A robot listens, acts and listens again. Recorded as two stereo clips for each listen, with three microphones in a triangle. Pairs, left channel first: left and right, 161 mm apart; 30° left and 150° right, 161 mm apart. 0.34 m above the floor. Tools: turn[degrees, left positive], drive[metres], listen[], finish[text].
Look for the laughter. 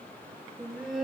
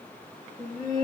Thought: The laughter: 175° right.
Action: turn[-175]
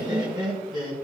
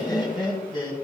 Thought: The laughter is now 30° right.
Action: turn[-30]
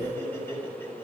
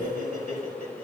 Thought: The laughter is now 15° left.
Action: turn[15]
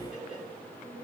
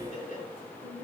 Action: finish[Found it: laughter, straight ahead, over 4 m away.]